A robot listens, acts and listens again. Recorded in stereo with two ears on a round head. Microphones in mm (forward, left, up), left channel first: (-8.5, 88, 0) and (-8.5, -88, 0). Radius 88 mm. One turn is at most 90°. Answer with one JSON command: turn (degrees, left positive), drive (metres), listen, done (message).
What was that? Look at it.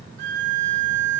{"turn": -60}
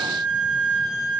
{"turn": -60}
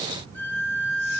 {"turn": 10}
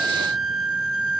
{"done": "Found it: a violin, straight ahead."}